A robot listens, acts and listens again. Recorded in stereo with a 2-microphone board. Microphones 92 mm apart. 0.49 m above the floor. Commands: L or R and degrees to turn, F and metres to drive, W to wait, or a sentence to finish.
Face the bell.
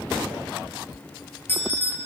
L25
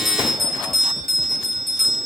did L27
Facing the bell.